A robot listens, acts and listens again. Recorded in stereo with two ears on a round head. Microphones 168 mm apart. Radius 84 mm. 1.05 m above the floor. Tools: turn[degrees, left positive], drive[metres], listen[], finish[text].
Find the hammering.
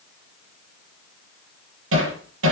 Action: turn[-90]
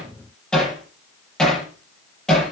Action: finish[Facing the hammering.]